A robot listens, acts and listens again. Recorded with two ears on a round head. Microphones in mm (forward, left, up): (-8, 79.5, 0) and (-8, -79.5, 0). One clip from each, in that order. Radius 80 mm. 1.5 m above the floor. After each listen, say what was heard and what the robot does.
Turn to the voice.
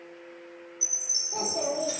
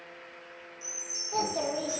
The child speaking: about 70° right or 110° right. Turn 70° right.
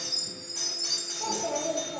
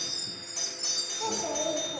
So it is at 25° right. Turn 25° right.
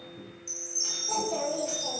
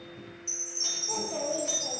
Found it: a child speaking, straight ahead, under 1 m away.